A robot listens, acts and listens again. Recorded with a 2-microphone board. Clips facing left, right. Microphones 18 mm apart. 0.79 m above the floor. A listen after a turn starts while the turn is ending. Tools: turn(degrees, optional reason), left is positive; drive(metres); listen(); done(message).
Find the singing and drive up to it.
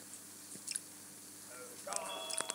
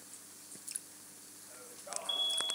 turn(degrees=30)
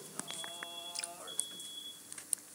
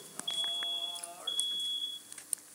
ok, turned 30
turn(degrees=-15, reason="So it is at 15° right.")
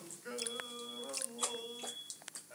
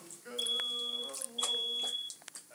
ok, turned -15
drive(metres=1.0)
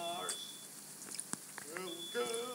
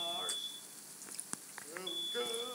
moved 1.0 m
drive(metres=1.0)
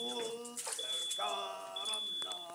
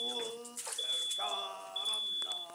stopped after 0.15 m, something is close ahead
done("I am next to the singing.")